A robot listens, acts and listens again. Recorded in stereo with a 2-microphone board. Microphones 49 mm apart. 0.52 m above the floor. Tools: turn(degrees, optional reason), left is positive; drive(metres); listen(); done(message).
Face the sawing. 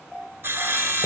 turn(degrees=-50, reason="The sawing: about 50° right or 130° right.")
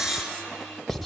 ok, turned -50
done("Found it: sawing, straight ahead, 1 to 2 m away.")